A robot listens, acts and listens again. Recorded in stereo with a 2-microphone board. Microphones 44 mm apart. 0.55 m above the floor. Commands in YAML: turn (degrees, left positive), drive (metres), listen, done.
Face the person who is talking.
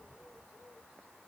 listen: true
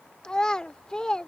turn: 20
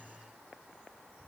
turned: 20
listen: true
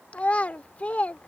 turn: 140
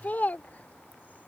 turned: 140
turn: 50
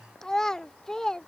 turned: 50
turn: 15
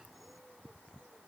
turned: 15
listen: true
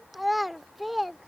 done: "Found it: a child speaking, straight ahead."